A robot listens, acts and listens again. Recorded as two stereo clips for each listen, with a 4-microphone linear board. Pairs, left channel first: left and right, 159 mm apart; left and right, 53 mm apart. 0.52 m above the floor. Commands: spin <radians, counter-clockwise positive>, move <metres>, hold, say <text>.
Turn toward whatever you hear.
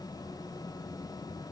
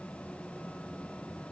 hold
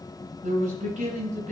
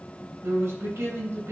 spin -0.87
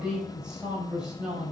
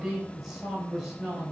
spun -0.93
say Facing the man speaking.